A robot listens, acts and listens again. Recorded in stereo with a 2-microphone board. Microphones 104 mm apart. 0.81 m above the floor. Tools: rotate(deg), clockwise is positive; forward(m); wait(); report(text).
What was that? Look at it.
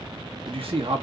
rotate(65)
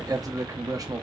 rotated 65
rotate(40)
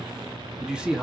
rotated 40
rotate(10)
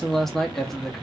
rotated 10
report("Facing the man speaking.")